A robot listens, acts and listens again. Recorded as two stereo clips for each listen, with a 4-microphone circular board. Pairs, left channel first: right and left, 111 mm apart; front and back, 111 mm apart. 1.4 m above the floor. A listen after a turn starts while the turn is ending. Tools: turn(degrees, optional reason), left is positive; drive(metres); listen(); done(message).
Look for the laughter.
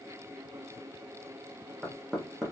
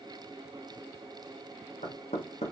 listen()
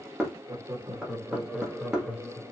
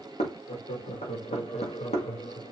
turn(degrees=-10, reason="The laughter: 10° right.")
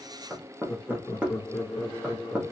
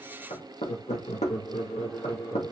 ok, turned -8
turn(degrees=-35, reason="The laughter is now 35° right.")
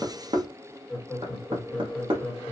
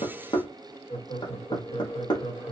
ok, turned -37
done("Found it: laughter, straight ahead.")